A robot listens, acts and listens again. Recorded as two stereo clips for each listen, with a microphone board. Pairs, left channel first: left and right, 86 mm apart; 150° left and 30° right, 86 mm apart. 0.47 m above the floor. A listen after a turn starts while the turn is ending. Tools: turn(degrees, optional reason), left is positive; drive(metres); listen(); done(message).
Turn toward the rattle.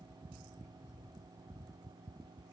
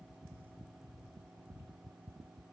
listen()
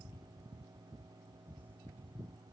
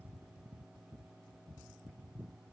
listen()
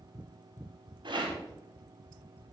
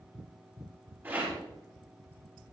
turn(degrees=-95, reason="The rattle: 95° right.")
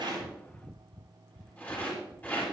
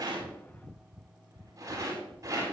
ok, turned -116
turn(degrees=20, reason="The rattle is now 20° left.")
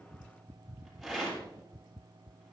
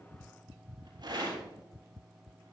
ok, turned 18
done("Found it: a rattle, straight ahead, over 4 m away.")